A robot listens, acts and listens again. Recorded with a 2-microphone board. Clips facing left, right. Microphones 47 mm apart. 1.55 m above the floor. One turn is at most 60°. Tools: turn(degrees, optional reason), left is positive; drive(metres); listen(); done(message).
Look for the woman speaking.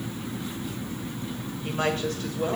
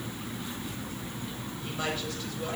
turn(degrees=50, reason="The woman speaking: about 50° left or 130° left.")
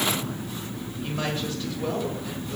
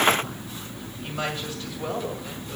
done("Found it: a woman speaking, straight ahead.")